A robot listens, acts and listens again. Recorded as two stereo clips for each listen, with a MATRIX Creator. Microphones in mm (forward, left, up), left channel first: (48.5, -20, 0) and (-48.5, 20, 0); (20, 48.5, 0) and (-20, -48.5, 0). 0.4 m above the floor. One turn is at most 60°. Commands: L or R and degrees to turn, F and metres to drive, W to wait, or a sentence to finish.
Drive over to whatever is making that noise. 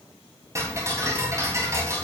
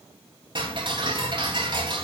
R60
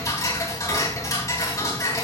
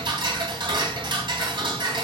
R60
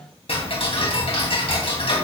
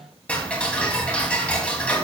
R10
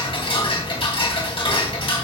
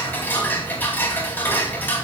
F1.0
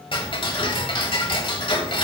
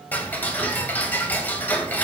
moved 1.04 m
F1.0
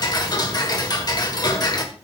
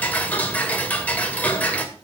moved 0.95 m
F1.0
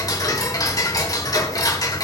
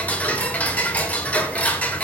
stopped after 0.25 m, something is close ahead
Arrived at the ticking, straight ahead.